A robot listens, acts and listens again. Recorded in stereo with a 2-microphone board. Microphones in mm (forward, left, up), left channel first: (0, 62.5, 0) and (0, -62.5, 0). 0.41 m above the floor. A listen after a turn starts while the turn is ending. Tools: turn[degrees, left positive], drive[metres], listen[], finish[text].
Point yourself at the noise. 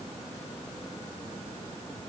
Action: listen[]
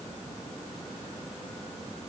Action: listen[]
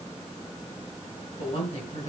Thought: The woman speaking: about 60° left or 120° left.
Action: turn[60]
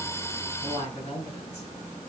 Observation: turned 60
Thought: So it is at 55° left.
Action: turn[55]
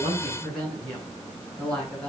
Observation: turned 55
Thought: The woman speaking is now 10° left.
Action: turn[10]
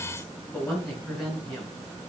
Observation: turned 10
Action: finish[Found it: a woman speaking, straight ahead, over 4 m away.]